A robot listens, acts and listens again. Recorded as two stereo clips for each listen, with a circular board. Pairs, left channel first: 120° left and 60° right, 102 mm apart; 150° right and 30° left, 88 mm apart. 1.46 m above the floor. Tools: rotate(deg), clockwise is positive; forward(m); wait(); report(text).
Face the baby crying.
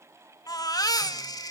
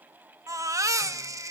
rotate(-75)
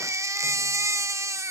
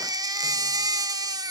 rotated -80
report("Facing the baby crying, 1 to 2 m away.")